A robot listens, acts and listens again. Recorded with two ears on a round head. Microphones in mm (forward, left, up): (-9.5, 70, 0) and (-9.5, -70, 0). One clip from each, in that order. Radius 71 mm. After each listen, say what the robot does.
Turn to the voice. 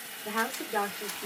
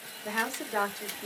Turn 30° right.
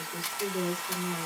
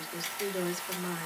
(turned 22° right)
Turn 125° right.
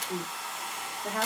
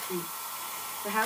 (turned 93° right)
Turn 35° right.
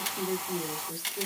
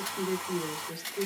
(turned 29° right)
Found it: a woman speaking, straight ahead.